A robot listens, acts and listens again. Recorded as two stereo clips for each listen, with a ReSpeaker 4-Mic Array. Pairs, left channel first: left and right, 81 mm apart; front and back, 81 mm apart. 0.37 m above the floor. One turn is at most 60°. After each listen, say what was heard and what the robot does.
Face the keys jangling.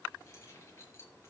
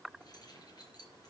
The keys jangling: 35° left. Turn 35° left.
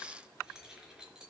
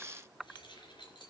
The keys jangling is now 10° right. Turn 10° right.
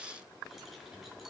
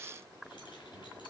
Keep listening.
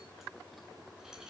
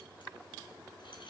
The keys jangling is now 10° right. Turn 10° right.
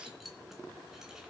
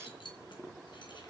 Facing the keys jangling, 2 to 4 m away.